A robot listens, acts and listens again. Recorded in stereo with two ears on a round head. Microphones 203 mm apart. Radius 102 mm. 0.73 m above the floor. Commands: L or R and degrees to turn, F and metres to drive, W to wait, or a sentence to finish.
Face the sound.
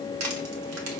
R90
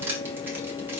R10
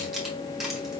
Facing the crushing, 1 to 2 m away.